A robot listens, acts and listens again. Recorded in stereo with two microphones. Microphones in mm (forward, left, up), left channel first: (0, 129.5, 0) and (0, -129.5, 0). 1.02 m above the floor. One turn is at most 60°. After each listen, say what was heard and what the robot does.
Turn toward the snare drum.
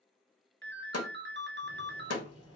The snare drum: about 70° left or 110° left. Turn 60° left.
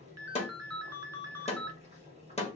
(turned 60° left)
So it is at 25° left. Turn 25° left.
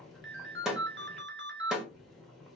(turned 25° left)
Found it: a snare drum, straight ahead.